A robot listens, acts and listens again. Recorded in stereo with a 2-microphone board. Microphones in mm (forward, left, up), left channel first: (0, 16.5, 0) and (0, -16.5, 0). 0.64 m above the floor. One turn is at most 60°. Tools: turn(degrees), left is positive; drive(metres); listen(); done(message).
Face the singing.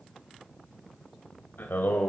turn(degrees=60)
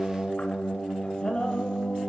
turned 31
turn(degrees=20)
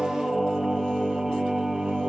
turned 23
turn(degrees=-20)
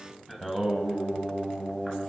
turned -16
done("Found it: singing, straight ahead, 2 to 4 m away.")